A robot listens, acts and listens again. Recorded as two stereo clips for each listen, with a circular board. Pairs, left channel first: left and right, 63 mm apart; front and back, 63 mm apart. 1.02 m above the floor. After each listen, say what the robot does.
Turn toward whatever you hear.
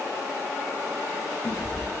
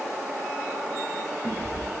Turn 50° left.
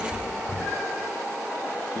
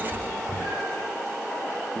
Found it: a cat meowing, straight ahead, 2 to 4 m away.